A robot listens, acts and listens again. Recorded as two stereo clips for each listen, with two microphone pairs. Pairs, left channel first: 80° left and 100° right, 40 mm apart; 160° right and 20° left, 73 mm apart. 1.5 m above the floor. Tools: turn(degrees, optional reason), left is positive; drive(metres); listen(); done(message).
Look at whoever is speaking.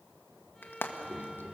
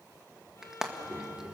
turn(degrees=-45, reason="The child speaking: 45° right.")
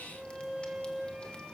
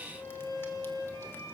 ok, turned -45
listen()
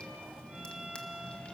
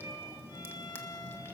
turn(degrees=10, reason="The child speaking is now 10° left.")
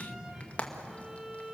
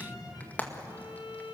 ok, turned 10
done("Found it: a child speaking, straight ahead.")